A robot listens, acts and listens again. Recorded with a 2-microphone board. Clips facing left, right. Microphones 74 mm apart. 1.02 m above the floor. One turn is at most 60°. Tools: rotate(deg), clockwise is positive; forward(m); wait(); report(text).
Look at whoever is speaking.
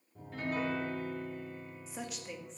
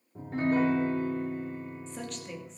rotate(-30)
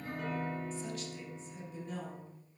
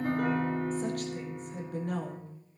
rotate(60)
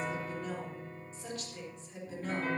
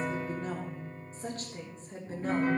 rotate(40)
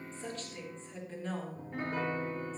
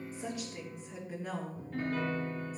report("Found it: a woman speaking, straight ahead, 2 to 4 m away.")